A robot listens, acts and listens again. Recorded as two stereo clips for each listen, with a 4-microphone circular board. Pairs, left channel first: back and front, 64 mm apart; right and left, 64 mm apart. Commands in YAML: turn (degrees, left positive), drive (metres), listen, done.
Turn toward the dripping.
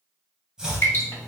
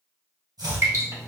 turn: 130
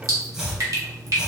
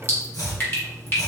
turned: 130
turn: -30
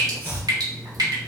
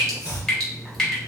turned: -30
turn: -10
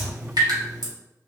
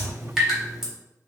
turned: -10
done: "Facing the dripping, 1 to 2 m away."